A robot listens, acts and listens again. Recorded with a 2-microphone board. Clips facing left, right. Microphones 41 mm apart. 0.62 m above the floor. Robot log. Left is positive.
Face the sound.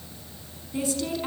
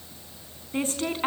note: The woman speaking: about 40° right or 140° right.
cmd yaw -40
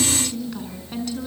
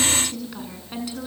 note: So it is at 10° right.
cmd yaw -10
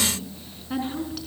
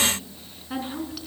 end: Facing the woman speaking, over 4 m away.